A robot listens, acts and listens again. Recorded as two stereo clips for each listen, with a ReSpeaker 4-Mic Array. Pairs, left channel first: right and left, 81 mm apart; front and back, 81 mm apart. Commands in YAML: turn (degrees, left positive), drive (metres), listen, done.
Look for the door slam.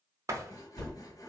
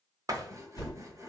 turn: 140
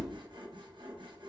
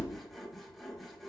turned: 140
done: "Facing where the door slam came from. I can't hear it now."